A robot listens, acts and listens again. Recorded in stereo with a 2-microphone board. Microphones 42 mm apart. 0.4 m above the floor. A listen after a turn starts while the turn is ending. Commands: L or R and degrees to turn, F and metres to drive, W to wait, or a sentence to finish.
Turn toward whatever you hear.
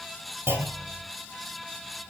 R70
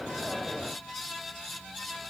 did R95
W
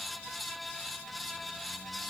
I heard a clunk, but can't make it out now. It was about 15° right or 25° left.